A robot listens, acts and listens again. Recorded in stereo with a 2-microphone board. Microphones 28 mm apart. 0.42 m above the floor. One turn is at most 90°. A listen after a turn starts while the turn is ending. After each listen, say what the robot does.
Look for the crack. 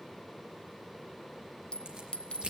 Turn 30° right.
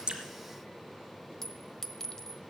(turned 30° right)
Keep listening.
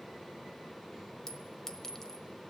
I heard a crack, but can't make it out now. It was about straight ahead or 120° right.